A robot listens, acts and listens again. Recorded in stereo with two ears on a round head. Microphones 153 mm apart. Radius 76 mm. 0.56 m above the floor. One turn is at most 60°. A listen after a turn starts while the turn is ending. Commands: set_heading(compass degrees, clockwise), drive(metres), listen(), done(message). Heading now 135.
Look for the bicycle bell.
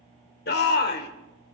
listen()
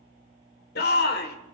listen()
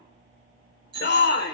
set_heading(165)
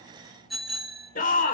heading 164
done("Found it: a bicycle bell, straight ahead.")